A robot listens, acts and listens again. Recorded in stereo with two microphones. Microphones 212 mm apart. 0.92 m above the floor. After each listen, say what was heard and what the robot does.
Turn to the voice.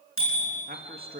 The man speaking: about 45° right or 135° right. Turn 45° right.
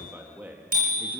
So it is at 10° right. Turn 10° right.
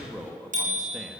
Facing the man speaking.